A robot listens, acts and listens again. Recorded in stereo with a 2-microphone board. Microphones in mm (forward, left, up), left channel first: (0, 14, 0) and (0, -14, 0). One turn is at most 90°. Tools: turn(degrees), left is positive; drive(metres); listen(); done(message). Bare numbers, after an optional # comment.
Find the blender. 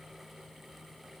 listen()
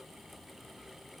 listen()
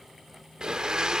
# The blender: about 25° right or 155° right.
turn(-25)
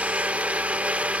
# So it is at 130° right.
turn(-90)
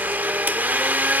# The blender is now 80° right.
turn(-80)
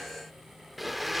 done("Facing the blender, under 1 m away.")